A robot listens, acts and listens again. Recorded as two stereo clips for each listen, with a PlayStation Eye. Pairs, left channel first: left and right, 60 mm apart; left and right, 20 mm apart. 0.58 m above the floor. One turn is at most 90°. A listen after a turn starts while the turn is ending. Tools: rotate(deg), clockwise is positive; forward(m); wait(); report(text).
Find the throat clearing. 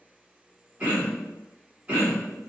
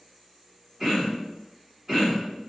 rotate(25)
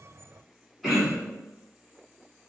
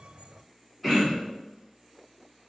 report("Facing the throat clearing, 1 to 2 m away.")